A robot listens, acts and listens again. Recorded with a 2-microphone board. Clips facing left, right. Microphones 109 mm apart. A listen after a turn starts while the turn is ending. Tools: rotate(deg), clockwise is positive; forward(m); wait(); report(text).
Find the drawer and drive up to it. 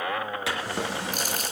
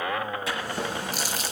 rotate(-90)
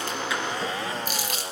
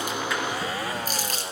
wait()
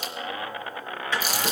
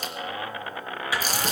rotate(10)
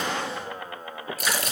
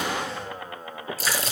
wait()
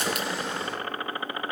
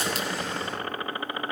forward(1.0)
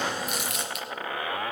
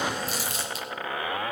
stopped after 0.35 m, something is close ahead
wait()
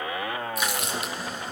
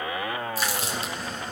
report("Blocked. The drawer is further on, straight ahead.")